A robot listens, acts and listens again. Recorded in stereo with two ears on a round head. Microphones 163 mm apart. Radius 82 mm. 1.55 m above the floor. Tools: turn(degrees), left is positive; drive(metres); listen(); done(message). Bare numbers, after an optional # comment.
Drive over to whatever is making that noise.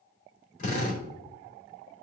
# The drill: about 45° left or 135° left.
turn(45)
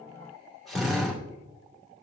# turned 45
drive(1.0)
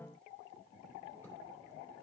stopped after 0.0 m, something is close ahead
listen()
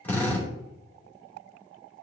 # The drill is now 10° left.
turn(10)
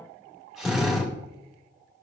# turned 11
done("Blocked. The drill is further on, straight ahead.")